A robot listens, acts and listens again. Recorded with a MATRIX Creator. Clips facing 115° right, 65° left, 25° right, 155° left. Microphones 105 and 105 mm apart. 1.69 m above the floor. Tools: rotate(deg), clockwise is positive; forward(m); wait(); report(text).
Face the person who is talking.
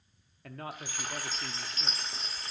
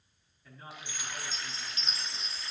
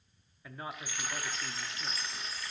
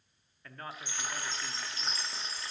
rotate(105)
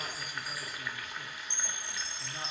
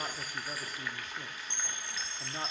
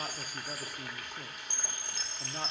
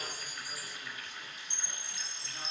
wait()
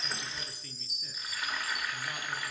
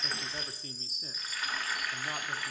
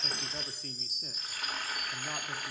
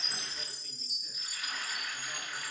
wait()
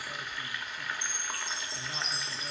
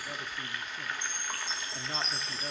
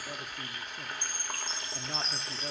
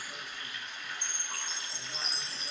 report("I heard a man speaking from this way, but can't make it out now.")